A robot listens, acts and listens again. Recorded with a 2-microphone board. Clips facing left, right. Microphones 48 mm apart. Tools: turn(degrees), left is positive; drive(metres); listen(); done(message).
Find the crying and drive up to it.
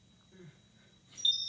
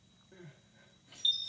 turn(degrees=-90)
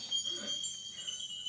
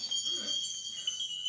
listen()
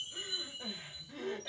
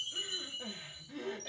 drive(metres=1.0)
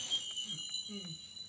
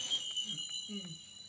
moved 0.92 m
drive(metres=1.0)
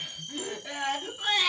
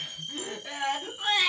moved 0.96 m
drive(metres=1.0)
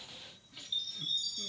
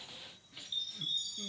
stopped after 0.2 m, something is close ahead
listen()
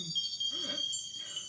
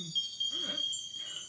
turn(degrees=-10)
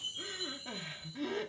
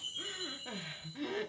done("I am next to the crying.")